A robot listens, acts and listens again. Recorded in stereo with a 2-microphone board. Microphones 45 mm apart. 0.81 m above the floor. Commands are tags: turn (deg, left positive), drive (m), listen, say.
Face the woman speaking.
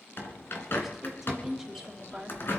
<turn deg="-30"/>
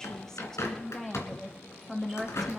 <turn deg="-30"/>
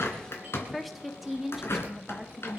<turn deg="-30"/>
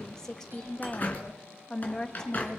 <turn deg="15"/>
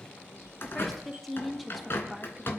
<say>Found it: a woman speaking, straight ahead.</say>